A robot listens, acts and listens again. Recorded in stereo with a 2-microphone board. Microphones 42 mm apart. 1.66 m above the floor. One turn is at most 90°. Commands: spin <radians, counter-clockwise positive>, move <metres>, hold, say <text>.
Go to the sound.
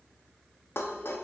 spin 1.22
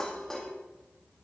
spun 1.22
spin 0.17
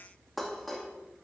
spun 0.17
move 1.0
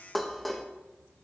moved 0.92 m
move 1.0
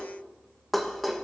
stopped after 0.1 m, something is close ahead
say Arrived at the dishes clattering, straight ahead.